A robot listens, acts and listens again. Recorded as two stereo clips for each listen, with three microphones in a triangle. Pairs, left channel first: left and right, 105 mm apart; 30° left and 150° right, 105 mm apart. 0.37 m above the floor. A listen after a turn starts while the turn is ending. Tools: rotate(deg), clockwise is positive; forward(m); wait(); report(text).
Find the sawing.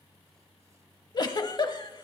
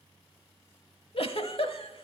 wait()
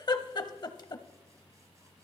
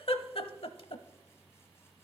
wait()
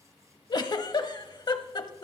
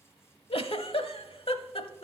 report("I can't make out sawing to turn to.")